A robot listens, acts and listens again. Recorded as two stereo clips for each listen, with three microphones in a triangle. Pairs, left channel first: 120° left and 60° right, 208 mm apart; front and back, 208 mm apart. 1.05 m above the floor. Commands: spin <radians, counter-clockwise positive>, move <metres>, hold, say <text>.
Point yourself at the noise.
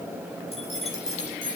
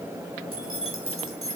spin 3.05
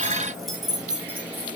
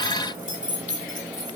spin 0.44
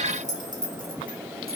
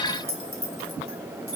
spin -0.26
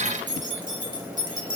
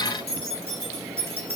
spin -0.17
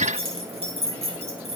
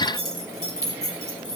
say Facing the keys jangling, 2 to 4 m away.